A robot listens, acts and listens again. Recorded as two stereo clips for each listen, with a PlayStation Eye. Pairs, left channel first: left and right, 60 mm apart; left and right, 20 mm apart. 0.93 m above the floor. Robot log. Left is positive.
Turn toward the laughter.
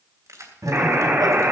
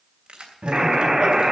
cmd yaw -90
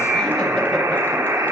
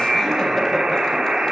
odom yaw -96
cmd idle
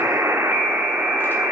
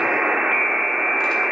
cmd idle
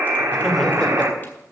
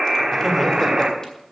end: Facing where the laughter came from. I can't hear it now.